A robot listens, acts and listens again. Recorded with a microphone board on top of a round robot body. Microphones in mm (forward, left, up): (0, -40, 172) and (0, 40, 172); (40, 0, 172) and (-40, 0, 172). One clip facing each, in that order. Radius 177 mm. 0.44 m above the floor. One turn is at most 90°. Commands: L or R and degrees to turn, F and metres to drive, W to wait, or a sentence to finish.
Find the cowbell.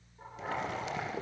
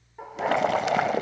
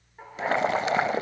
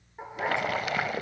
W
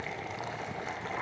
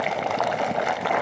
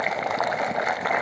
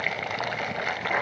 W
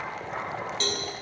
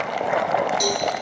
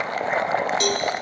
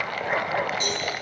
L15
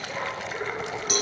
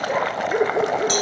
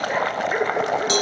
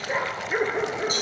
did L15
Facing the cowbell, over 4 m away.